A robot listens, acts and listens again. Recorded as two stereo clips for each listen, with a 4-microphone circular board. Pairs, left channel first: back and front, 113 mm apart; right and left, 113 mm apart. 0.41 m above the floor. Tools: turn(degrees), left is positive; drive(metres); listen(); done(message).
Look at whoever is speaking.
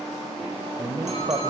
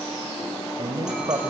turn(degrees=50)
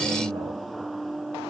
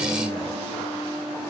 listen()
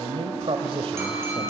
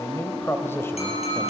turn(degrees=-25)
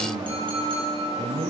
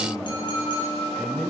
done("Found it: a man speaking, straight ahead.")